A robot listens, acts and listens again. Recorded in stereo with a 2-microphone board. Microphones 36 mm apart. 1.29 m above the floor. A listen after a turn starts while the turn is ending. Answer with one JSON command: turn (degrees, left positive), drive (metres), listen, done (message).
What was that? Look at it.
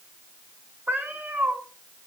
{"turn": -55}
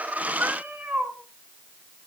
{"turn": -65}
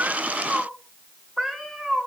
{"done": "Found it: a cat meowing, straight ahead."}